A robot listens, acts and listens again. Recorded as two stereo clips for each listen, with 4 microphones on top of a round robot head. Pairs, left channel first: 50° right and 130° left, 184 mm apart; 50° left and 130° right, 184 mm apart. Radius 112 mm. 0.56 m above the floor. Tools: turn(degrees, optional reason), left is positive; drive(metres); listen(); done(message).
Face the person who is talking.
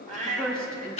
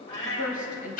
turn(degrees=40, reason="The woman speaking: 40° left.")
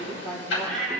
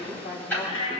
done("Facing the woman speaking.")